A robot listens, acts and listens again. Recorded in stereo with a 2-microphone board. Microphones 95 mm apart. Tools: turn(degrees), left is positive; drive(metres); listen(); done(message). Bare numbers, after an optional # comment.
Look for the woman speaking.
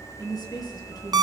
# The woman speaking: about 40° left or 140° left.
turn(40)
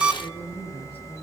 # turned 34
listen()
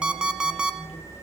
listen()
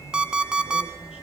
done("I heard a woman speaking, but can't make it out now. It was about 10° left or 105° left.")